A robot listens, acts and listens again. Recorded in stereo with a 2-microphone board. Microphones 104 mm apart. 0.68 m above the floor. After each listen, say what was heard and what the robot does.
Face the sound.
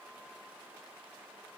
Keep listening.
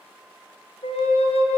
The flute: about 75° left or 105° left. Turn 75° left.
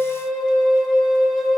Facing the flute, under 1 m away.